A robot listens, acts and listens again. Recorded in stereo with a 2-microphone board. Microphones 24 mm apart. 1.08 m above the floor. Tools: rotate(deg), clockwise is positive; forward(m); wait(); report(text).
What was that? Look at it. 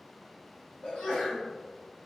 rotate(-60)
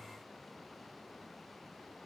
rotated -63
wait()
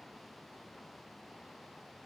report("I heard a sneeze, but can't make it out now. It was about straight ahead or 55° left.")